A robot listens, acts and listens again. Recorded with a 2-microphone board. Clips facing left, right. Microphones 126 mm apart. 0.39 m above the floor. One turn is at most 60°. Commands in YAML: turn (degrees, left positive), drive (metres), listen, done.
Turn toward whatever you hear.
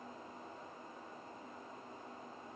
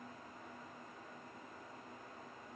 listen: true
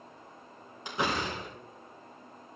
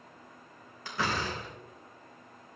turn: 20
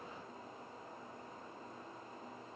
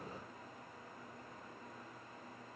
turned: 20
listen: true
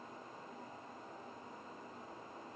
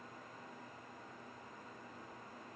done: "I heard a door slam, but can't make it out now. It was about straight ahead or 140° left."